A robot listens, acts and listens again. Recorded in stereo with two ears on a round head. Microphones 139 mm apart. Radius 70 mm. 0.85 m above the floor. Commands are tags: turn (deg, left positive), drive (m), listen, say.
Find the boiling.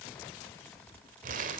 <listen/>
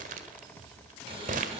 <turn deg="-40"/>
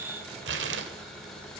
<say>Found it: boiling, straight ahead, over 4 m away.</say>